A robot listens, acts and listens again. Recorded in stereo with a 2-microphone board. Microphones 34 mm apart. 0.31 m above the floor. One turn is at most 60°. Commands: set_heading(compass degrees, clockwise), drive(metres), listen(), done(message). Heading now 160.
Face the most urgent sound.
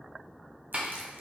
listen()
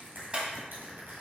listen()
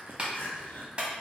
set_heading(100)
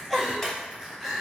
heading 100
done("Facing the crying, 1 to 2 m away.")